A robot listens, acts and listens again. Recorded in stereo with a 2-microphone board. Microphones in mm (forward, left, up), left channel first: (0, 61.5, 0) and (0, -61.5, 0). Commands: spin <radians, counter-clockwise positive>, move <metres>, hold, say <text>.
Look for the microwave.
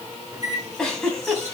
spin -0.52
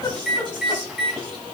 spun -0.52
say Found it: a microwave, straight ahead.